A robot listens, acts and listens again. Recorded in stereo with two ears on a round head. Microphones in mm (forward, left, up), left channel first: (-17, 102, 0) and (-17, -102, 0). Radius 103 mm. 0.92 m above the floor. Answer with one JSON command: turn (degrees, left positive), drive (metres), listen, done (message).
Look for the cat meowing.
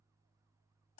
{"listen": true}
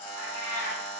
{"turn": -50}
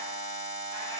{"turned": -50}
{"listen": true}
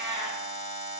{"turn": -25}
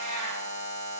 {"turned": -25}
{"turn": -25}
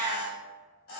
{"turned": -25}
{"turn": -15}
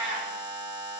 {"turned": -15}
{"turn": -10}
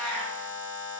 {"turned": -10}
{"done": "Found it: a cat meowing, straight ahead, 1 to 2 m away."}